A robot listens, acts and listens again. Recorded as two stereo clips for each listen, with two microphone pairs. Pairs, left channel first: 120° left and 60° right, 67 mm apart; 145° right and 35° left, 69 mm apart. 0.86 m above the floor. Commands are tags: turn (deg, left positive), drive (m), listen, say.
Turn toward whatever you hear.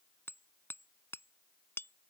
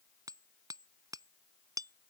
<turn deg="65"/>
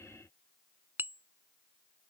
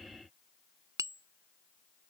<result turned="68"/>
<say>Facing the hammering.</say>